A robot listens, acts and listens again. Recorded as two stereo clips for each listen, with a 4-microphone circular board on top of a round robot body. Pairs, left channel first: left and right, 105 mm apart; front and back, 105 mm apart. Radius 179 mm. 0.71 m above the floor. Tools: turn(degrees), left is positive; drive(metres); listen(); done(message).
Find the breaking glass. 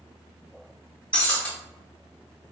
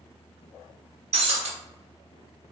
turn(degrees=170)
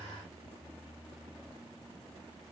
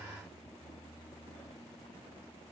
done("Facing where the breaking glass came from. I can't hear it now.")